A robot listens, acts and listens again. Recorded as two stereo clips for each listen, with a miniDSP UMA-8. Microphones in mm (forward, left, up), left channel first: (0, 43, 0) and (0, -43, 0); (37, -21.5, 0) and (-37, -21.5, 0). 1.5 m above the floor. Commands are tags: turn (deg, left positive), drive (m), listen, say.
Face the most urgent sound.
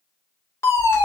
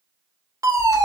<turn deg="145"/>
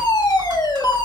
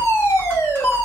<turn deg="55"/>
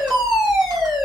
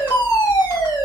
<say>Facing the fire alarm, over 4 m away.</say>